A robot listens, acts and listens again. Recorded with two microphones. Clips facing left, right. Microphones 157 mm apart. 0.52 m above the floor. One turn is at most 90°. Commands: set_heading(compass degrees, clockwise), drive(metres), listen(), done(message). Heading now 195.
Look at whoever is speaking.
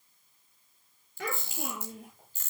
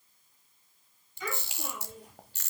set_heading(105)
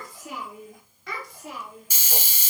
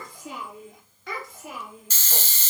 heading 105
done("Found it: a child speaking, straight ahead, over 4 m away.")